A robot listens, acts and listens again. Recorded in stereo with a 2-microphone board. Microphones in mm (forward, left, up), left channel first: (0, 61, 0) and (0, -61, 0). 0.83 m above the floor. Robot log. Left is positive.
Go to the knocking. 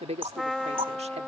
note: The knocking: about 50° right or 130° right.
cmd yaw -50
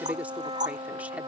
note: So it is at 80° right.
cmd yaw -80
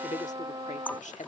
note: The knocking is now 15° left.
cmd yaw +15
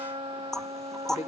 cmd fwd 1.0
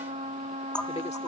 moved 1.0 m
note: The knocking is now 10° left.
cmd yaw +10
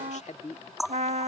cmd fwd 1.0
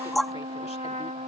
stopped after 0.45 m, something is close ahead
end: I am next to the knocking.